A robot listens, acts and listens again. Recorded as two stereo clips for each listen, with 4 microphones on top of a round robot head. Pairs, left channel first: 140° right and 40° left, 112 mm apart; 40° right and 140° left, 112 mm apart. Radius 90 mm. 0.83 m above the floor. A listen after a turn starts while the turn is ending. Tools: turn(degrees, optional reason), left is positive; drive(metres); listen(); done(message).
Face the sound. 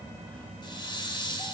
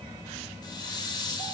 turn(degrees=-90, reason="The hiss: 90° right.")
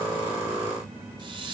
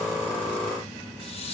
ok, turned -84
turn(degrees=-10, reason="The hiss is now 10° right.")
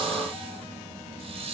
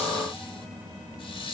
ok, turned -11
done("Found it: a hiss, straight ahead, over 4 m away.")